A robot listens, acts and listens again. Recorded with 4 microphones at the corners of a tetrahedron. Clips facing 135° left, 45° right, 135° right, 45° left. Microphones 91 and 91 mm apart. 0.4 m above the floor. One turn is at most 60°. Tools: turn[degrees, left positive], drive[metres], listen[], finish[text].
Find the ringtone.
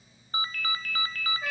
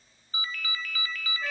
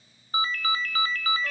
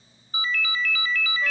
Thought: The ringtone: straight behind.
Action: turn[60]
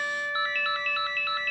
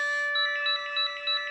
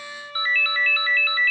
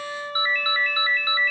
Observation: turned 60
Thought: The ringtone is now 120° left.
Action: turn[60]
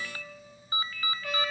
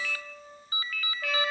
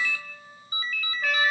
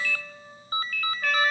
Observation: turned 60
Thought: The ringtone is now 75° left.
Action: turn[60]
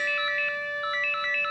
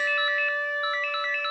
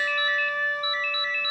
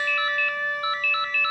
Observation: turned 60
Thought: The ringtone is now 40° left.
Action: turn[40]
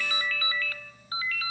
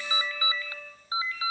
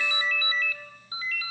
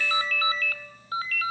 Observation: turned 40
Thought: The ringtone is now 20° left.
Action: turn[20]
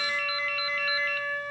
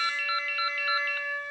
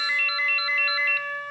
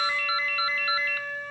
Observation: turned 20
Action: finish[Facing the ringtone, 1 to 2 m away.]